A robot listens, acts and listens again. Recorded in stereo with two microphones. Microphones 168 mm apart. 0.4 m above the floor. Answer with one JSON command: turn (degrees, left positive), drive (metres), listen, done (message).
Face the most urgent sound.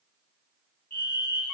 {"turn": 65}
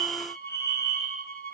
{"turn": 15}
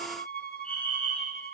{"done": "Facing the fire alarm."}